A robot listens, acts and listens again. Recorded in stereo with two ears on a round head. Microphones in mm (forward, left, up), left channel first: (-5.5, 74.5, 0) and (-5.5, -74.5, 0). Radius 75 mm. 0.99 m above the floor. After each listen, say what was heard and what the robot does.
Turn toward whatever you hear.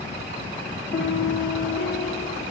Turn 90° left.
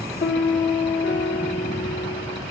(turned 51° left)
So it is at 55° left. Turn 55° left.
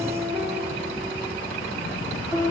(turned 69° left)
The piano is now 15° right. Turn 15° right.
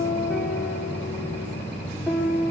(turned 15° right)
Facing the piano.